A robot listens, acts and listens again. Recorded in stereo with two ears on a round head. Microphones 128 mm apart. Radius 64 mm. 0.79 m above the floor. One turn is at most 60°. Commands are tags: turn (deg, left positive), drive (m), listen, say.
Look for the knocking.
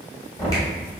<turn deg="20"/>
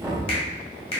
<say>Facing the knocking, 1 to 2 m away.</say>